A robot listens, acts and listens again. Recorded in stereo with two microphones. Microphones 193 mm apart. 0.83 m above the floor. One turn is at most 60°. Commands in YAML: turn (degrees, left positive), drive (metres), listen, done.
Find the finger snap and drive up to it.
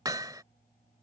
listen: true
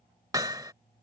listen: true
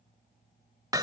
done: "I can't make out a finger snap, only hammering."